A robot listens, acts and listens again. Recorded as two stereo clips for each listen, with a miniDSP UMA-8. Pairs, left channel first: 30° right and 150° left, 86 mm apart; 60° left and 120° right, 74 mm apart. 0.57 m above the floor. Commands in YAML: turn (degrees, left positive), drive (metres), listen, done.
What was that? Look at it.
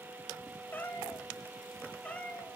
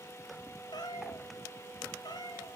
turn: 45
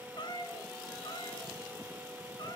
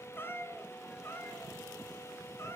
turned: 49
done: "Found it: a cat meowing, straight ahead."